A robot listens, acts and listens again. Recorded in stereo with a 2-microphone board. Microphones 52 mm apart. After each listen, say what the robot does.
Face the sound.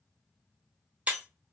Turn 30° right.
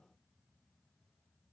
Keep listening.
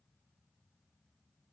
I heard breaking glass, but can't make it out now. It was about straight ahead or 120° right.